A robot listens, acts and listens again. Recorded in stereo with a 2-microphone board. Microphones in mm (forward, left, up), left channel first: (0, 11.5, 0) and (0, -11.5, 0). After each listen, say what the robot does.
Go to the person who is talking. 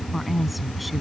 Turn 30° left.
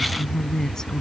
Turn 150° left.
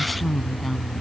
Drive 1.0 m forward.
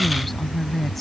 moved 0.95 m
Drive 1.0 m forward.
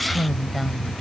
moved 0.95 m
Drive 1.0 m forward.
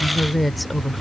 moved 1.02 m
Drive 1.0 m forward.
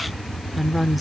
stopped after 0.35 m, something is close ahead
Turn 10° right.
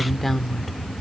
I am next to the woman speaking.